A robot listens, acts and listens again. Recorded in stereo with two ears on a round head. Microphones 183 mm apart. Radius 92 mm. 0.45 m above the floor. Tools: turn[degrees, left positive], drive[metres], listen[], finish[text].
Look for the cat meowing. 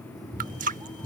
Thought: The cat meowing: about 20° right or 160° right.
Action: turn[-20]
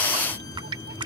Action: listen[]
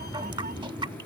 Thought: So it is at 140° right.
Action: turn[-140]
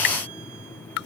Action: listen[]
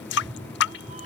Thought: The cat meowing is now 30° right.
Action: turn[-30]
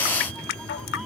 Action: finish[Facing the cat meowing.]